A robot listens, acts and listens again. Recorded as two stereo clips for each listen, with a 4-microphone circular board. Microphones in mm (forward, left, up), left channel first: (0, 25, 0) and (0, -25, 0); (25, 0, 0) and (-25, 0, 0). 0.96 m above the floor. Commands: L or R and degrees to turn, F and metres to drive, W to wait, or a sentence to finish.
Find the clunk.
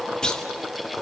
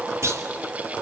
L165
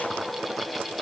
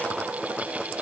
I heard a clunk from this way, but can't make it out now.